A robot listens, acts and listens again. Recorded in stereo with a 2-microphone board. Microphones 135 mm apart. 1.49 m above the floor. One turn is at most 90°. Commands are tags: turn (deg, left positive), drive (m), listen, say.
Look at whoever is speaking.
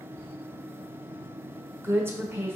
<turn deg="-15"/>
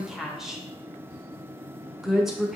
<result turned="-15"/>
<say>Facing the woman speaking, under 1 m away.</say>